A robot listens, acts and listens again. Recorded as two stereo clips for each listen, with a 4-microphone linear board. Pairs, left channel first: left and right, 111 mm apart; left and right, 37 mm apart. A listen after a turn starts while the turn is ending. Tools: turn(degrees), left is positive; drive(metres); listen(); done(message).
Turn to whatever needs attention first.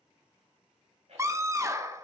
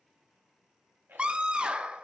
turn(degrees=-25)
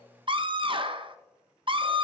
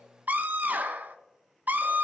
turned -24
turn(degrees=-130)
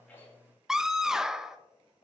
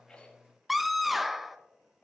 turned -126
done("Found it: a scream, straight ahead.")